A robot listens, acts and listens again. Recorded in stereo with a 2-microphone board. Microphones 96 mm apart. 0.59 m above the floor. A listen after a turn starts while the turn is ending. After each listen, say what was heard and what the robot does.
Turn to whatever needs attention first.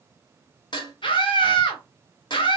The scream: about 60° left or 120° left. Turn 60° left.
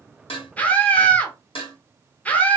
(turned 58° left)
So it is at 15° left. Turn 15° left.
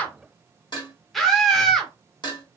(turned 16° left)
Facing the scream.